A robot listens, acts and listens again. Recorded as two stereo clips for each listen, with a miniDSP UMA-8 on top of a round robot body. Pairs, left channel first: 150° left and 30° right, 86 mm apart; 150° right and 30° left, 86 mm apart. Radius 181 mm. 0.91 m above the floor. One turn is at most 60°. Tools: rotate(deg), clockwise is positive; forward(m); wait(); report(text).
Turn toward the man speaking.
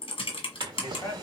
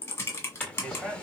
rotate(-60)
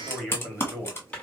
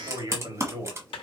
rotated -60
rotate(-60)
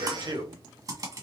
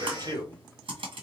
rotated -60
report("Facing the man speaking.")